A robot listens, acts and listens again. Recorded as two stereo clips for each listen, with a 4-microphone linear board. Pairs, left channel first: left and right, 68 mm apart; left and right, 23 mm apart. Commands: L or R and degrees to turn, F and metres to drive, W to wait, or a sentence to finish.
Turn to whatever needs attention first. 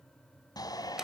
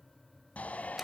L70
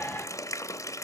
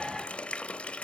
L30
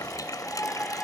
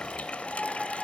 L20
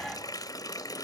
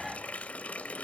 W
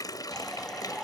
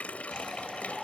Facing the shout.